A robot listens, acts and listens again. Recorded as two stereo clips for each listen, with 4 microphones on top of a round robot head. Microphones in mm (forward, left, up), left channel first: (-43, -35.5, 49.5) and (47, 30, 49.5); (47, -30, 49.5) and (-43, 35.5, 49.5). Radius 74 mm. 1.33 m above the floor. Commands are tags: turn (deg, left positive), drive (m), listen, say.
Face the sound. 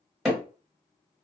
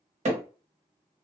<turn deg="125"/>
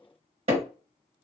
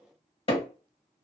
<say>Found it: hammering, straight ahead.</say>